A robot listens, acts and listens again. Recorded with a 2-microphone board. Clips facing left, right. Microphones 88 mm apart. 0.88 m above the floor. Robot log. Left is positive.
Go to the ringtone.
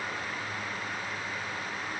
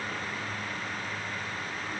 cmd idle
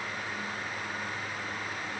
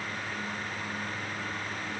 cmd idle
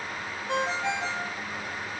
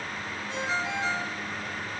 cmd yaw +90
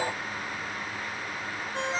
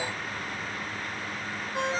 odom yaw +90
cmd fwd 1.0
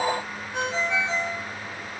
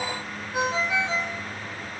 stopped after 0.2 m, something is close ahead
note: The ringtone is now 10° right.
cmd yaw -10
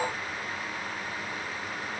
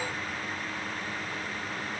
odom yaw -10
cmd idle
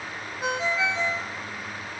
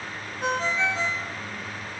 end: Blocked. The ringtone is further on, straight ahead.